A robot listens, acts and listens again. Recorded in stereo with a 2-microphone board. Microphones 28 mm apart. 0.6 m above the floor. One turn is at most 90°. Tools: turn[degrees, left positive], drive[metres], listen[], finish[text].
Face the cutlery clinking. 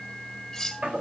Action: turn[30]
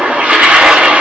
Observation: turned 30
Action: listen[]
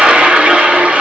Action: listen[]
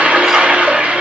Action: finish[I heard cutlery clinking, but can't make it out now. It was about 15° right or 135° left.]